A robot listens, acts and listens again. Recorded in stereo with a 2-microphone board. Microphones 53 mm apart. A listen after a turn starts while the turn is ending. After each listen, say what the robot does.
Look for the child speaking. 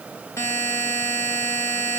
Keep listening.
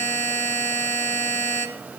Keep listening.
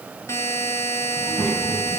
Turn 15° left.
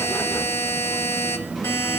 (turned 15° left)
Turn 30° left.
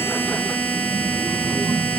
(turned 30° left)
Turn 30° right.
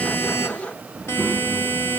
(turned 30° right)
Found it: a child speaking, straight ahead.